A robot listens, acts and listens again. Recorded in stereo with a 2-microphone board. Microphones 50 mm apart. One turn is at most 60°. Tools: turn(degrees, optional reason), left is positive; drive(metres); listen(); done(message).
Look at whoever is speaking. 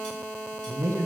turn(degrees=-60)
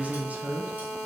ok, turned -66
turn(degrees=-30, reason="So it is at 30° right.")
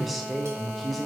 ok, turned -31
done("Found it: a man speaking, straight ahead.")